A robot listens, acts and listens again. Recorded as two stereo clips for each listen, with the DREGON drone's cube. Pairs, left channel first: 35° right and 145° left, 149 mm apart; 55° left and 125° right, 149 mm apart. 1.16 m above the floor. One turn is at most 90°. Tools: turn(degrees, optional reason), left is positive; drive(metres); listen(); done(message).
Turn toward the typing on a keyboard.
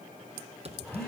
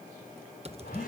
turn(degrees=-90, reason="The typing on a keyboard: 170° right.")
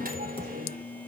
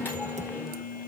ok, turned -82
turn(degrees=-85, reason="Nothing new. It was at 85° right.")
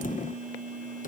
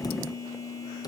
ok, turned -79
turn(degrees=-10, reason="Nothing new. It was at 10° right.")
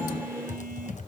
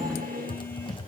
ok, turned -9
done("Found it: typing on a keyboard, straight ahead, under 1 m away.")